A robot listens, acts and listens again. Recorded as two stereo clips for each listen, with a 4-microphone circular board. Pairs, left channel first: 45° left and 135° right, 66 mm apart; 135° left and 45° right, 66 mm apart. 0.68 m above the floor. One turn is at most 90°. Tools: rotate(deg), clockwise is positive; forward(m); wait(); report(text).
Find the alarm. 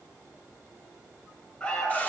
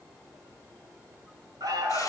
rotate(30)
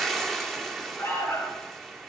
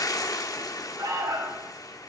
rotate(10)
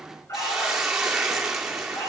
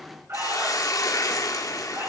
report("Found it: an alarm, straight ahead.")